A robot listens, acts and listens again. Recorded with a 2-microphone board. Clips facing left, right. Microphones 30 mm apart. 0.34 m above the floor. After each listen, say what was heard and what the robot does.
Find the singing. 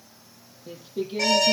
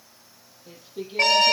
Turn 30° left.
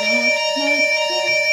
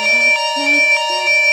Keep listening.
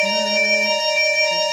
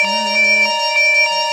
Keep listening.
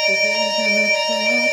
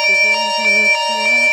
I heard singing, but can't make it out now. It was about 20° right or 140° left.